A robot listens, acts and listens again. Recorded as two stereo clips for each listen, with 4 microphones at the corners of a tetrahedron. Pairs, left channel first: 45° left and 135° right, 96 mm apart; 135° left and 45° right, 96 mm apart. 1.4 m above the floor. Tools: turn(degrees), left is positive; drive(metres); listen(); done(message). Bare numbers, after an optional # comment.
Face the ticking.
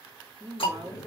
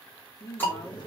# The ticking: 65° left.
turn(65)
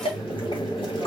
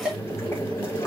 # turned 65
# The ticking is now 35° left.
turn(35)
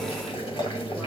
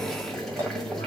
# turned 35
listen()
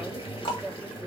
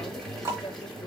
# The ticking is now 15° left.
turn(15)
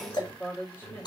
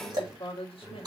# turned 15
done("Facing the ticking.")